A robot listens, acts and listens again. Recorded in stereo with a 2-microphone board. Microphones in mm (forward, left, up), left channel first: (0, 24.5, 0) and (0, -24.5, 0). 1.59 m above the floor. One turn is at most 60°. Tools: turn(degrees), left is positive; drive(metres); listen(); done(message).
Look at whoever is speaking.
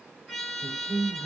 turn(degrees=-60)
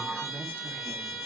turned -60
turn(degrees=-40)
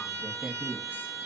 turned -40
turn(degrees=-35)
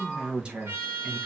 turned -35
turn(degrees=-35)
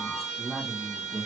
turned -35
done("Found it: a woman speaking, straight ahead.")